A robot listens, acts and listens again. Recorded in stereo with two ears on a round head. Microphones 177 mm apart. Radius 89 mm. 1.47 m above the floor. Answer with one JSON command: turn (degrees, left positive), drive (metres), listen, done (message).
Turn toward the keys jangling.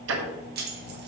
{"turn": -50}
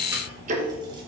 {"listen": true}
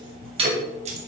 {"turn": -35}
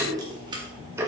{"listen": true}
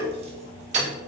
{"turn": -35}
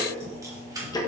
{"turn": -20}
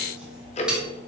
{"listen": true}
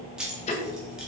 {"done": "Found it: keys jangling, straight ahead, 1 to 2 m away."}